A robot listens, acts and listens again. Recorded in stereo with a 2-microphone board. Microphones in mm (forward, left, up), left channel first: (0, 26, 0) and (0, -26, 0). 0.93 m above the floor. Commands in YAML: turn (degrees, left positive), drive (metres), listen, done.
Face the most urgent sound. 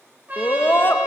turn: 45
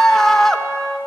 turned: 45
turn: 10
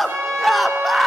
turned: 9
done: "Facing the scream."